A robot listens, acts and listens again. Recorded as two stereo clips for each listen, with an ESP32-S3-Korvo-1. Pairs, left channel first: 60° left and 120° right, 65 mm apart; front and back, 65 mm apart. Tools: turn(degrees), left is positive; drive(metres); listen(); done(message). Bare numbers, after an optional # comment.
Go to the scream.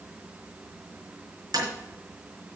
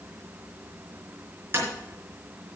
listen()
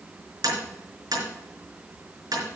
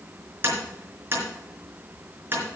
listen()
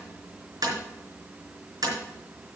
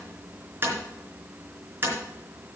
done("I can't make out a scream to turn to.")